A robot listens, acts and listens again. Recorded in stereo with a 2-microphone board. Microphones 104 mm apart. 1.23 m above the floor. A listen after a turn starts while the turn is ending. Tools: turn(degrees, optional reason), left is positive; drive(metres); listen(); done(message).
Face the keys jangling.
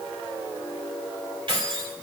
turn(degrees=-50, reason="The keys jangling: about 50° right or 130° right.")
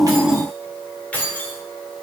turn(degrees=15, reason="So it is at 15° left.")
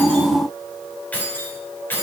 turn(degrees=20, reason="The keys jangling is now 20° left.")
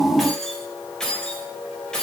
done("Facing the keys jangling.")